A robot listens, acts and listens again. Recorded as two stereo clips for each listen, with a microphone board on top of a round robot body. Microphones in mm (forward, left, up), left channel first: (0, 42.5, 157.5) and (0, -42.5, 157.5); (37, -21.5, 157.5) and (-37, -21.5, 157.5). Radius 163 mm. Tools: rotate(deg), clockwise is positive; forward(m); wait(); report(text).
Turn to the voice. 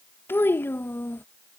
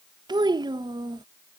rotate(-155)
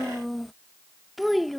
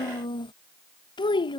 report("Found it: a child speaking, straight ahead.")